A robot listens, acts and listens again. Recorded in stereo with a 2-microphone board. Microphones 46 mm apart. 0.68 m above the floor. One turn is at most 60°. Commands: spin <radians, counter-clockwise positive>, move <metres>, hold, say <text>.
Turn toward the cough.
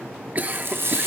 spin -0.61
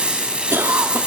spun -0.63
spin -1.05
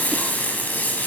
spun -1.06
spin -0.61
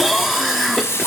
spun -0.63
say Facing the cough.